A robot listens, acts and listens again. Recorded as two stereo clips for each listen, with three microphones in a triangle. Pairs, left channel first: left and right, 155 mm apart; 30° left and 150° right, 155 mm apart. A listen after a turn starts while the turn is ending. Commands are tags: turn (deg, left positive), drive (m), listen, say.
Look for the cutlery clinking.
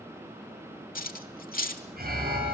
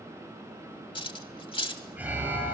<turn deg="85"/>
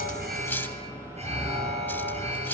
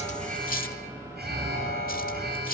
<turn deg="15"/>
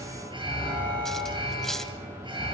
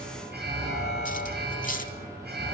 <listen/>
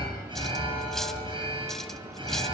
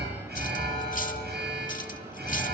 <listen/>
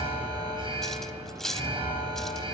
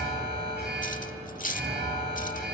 <say>Facing the cutlery clinking, under 1 m away.</say>